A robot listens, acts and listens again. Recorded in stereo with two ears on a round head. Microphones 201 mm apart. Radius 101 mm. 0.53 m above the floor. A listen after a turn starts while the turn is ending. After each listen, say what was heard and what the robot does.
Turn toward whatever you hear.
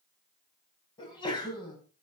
The sneeze: about 20° left or 160° left. Turn 20° left.
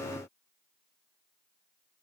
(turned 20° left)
Keep listening.
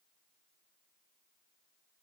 I heard a sneeze, but can't make it out now. It was about straight ahead or 140° left.